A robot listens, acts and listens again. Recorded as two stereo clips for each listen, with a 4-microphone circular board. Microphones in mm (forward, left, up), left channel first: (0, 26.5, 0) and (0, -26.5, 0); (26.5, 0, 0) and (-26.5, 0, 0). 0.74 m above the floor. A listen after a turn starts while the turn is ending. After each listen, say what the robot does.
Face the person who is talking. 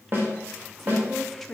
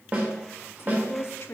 Found it: a woman speaking, straight ahead.